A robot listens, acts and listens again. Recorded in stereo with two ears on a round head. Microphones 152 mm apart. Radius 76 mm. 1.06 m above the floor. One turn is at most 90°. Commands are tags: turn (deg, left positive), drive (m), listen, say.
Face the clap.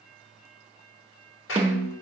<turn deg="90"/>
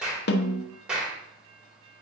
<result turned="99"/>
<say>Found it: a clap, straight ahead, 2 to 4 m away.</say>